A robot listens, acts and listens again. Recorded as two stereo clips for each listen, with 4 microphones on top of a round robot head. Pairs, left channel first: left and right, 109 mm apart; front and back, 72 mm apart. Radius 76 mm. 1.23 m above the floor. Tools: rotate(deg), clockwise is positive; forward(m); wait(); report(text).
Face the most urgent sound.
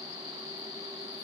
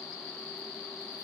wait()
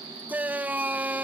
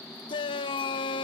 rotate(15)
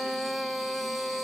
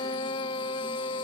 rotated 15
report("Found it: a shout, straight ahead.")